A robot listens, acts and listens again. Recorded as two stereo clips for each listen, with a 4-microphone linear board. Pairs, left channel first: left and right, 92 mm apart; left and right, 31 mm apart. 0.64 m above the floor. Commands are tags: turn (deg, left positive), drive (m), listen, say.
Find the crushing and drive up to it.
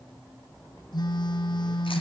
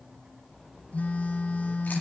<listen/>
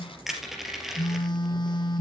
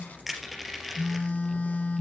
<turn deg="-30"/>
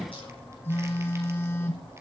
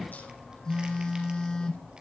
<listen/>
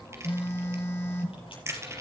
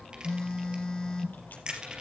<turn deg="-150"/>
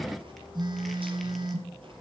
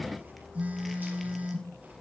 <listen/>
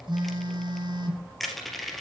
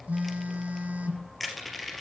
<drive m="1.0"/>
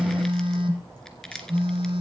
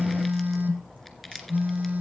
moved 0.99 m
<drive m="1.0"/>
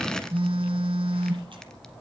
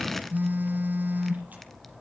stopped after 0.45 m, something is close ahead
<listen/>
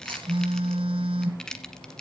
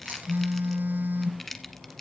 <turn deg="10"/>
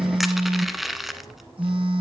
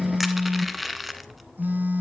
<say>Arrived at the crushing, straight ahead.</say>